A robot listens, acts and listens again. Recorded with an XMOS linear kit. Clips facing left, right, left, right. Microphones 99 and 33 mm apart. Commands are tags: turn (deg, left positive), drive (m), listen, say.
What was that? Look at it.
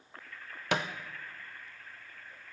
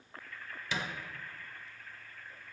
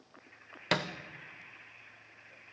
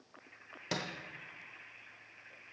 <turn deg="65"/>
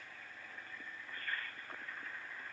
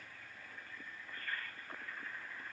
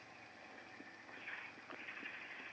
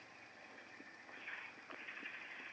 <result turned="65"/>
<listen/>
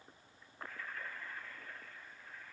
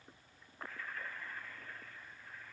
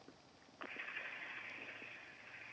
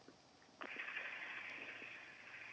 <say>I heard a thud, but can't make it out now. It was about straight ahead or 50° left.</say>